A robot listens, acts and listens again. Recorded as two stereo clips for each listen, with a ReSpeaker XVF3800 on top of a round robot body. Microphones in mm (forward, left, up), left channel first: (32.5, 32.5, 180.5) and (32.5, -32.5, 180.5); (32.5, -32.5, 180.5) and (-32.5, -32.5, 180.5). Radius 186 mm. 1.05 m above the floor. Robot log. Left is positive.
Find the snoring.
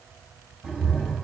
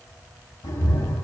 cmd idle
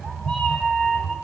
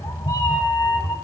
cmd idle
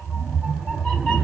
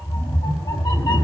end: I can't make out snoring, only a cat meowing.